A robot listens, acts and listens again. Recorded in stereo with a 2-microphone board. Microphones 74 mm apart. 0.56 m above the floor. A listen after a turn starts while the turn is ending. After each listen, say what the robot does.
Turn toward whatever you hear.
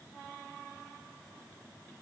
Keep listening.
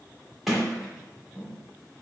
Turn 30° left.
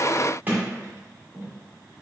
Turn 30° right.
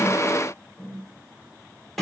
Facing the sliding door.